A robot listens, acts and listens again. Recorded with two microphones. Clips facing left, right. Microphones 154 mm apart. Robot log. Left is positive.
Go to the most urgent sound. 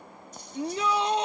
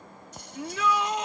note: The shout: about 30° left or 150° left.
cmd yaw +30
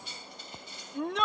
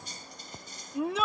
cmd fwd 1.0
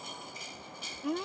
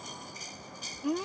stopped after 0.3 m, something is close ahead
end: Blocked. The shout is further on, straight ahead.